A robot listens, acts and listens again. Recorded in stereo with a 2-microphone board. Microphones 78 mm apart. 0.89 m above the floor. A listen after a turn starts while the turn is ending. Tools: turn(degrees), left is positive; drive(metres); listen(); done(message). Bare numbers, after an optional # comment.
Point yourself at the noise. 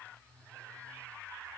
listen()
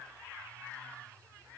listen()
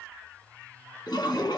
# The toilet flushing: about 75° left or 105° left.
turn(75)
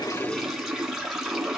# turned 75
done("Found it: a toilet flushing, straight ahead.")